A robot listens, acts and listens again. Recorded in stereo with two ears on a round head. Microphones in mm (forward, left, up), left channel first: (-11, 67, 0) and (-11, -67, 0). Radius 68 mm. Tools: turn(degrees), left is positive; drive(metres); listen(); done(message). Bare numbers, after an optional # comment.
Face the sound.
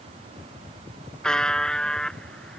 turn(30)
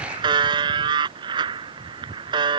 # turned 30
# So it is at 30° right.
turn(-30)
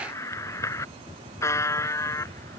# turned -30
# The buzzer is now 15° left.
turn(15)
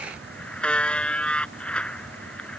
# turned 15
done("Facing the buzzer.")